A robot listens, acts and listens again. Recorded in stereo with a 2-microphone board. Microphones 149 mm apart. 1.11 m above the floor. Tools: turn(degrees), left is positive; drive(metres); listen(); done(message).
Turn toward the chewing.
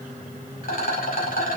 listen()
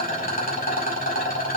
listen()
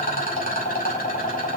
done("I can't make out chewing to turn to.")